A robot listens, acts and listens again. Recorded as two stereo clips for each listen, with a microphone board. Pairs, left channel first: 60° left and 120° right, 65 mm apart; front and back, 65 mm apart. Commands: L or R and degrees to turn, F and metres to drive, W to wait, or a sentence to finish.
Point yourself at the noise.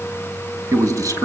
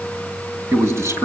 R135
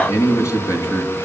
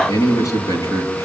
L25
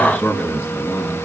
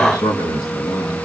Facing the man speaking.